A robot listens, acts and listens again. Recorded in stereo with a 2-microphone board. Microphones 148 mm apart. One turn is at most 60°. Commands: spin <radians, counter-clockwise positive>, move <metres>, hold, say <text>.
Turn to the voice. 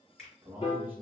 spin -0.52
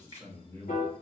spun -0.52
spin 0.35
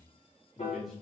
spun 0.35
say Found it: a man speaking, straight ahead, 1 to 2 m away.